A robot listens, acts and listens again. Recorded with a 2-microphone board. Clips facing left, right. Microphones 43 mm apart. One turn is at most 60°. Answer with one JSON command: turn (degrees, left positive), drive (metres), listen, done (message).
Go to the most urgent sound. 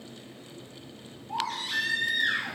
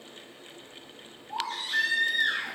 {"turn": 60}
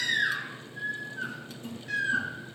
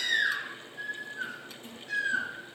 {"turn": 55}
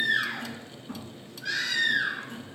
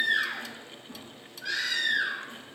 {"drive": 1.0}
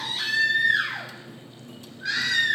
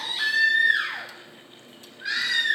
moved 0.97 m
{"turn": -10}
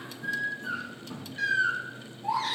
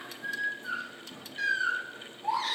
{"drive": 1.0}
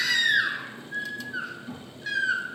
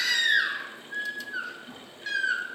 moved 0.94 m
{"drive": 1.0}
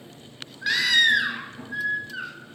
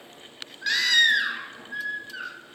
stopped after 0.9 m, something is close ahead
{"turn": 10}
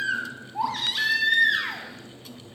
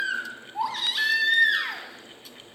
{"done": "I am next to the baby crying."}